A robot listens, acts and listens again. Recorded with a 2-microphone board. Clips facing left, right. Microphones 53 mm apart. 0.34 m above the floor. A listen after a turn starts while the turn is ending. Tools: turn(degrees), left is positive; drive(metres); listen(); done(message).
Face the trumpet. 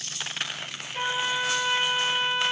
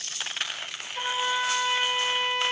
turn(degrees=30)
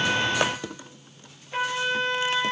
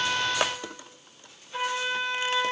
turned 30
turn(degrees=120)
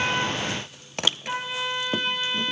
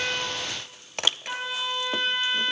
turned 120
done("Found it: a trumpet, straight ahead.")